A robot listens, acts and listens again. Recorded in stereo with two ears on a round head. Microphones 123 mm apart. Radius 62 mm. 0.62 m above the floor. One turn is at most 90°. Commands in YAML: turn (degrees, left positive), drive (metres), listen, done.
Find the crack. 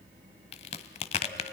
turn: 45
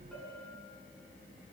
listen: true
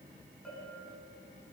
done: "I heard a crack, but can't make it out now. It was about straight ahead or 90° left."